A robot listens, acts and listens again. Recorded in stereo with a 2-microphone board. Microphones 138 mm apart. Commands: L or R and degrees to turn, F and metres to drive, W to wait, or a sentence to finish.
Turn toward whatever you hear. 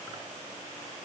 W
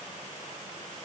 W
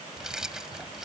R30
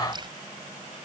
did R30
R145
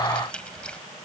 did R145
Facing the keys jangling.